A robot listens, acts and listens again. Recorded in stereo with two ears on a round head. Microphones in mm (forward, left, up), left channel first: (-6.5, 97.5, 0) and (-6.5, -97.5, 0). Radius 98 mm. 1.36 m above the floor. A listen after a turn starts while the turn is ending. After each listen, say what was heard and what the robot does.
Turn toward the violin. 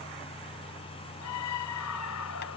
Keep listening.
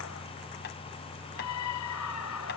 Keep listening.
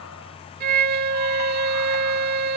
The violin: about 45° right or 135° right. Turn 45° right.
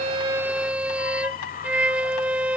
Found it: a violin, straight ahead.